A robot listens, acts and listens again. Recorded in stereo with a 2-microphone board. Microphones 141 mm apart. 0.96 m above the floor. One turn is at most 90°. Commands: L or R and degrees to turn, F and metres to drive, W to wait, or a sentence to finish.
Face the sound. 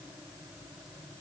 W
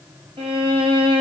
R40
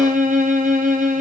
R90
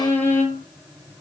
L15
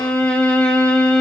L10
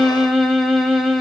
Found it: a violin, straight ahead.